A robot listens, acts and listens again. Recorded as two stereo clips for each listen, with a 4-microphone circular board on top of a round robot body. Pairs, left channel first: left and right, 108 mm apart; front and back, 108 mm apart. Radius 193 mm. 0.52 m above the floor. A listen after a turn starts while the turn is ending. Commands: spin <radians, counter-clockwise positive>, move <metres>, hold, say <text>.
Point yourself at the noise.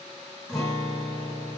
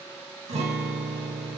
spin 3.14
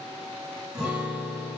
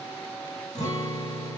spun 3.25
say Found it: a guitar, straight ahead.